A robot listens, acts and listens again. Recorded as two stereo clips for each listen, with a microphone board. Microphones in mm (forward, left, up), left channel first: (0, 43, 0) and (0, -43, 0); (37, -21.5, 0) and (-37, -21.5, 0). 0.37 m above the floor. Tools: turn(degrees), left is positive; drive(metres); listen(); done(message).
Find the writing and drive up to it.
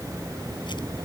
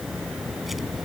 listen()
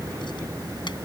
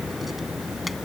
listen()
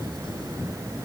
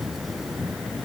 done("I can't make out writing.")